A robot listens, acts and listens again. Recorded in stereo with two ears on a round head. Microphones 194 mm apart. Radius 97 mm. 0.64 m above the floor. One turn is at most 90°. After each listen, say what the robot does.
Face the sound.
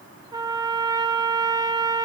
Turn 20° right.
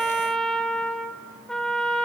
Facing the trumpet, 1 to 2 m away.